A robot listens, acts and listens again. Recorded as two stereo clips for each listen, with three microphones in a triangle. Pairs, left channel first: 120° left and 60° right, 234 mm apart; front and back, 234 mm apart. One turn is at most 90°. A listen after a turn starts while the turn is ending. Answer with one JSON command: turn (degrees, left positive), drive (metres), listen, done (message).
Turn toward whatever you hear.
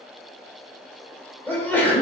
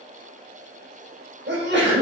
{"turn": -90}
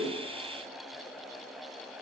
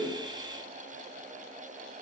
{"turn": -70}
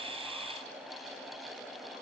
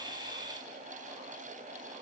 {"done": "Facing where the sneeze came from. I can't hear it now."}